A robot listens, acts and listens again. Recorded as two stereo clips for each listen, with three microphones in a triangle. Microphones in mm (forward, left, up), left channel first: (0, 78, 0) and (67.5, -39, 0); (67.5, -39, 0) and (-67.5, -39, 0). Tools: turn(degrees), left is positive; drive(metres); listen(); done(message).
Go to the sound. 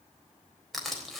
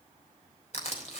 turn(degrees=30)
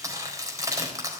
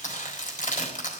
drive(metres=1.0)
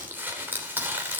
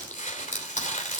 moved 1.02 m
turn(degrees=15)
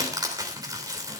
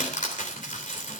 drive(metres=1.0)
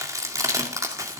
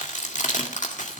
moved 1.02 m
drive(metres=1.0)
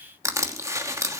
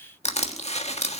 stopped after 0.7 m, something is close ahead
done("Arrived at the crushing, straight ahead.")